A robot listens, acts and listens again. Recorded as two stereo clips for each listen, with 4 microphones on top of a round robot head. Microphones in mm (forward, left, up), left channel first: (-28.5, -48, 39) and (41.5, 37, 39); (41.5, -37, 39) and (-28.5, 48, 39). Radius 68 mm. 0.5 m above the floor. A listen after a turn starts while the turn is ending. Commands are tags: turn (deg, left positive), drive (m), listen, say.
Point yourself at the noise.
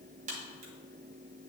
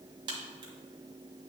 <turn deg="80"/>
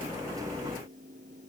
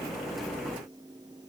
<say>I heard a crack from this way, but can't make it out now.</say>